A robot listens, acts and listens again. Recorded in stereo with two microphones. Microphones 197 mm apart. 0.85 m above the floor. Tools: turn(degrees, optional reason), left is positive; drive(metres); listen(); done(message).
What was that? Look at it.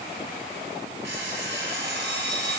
turn(degrees=-60, reason="The alarm clock: about 60° right or 120° right.")
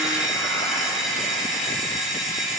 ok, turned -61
done("Facing the alarm clock, 2 to 4 m away.")